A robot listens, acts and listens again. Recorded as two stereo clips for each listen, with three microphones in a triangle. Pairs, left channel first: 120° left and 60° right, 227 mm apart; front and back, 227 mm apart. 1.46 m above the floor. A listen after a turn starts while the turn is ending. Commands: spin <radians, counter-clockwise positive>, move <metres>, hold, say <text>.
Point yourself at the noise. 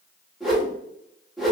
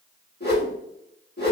spin 0.52
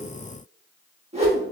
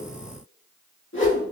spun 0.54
say Facing the whoosh, 1 to 2 m away.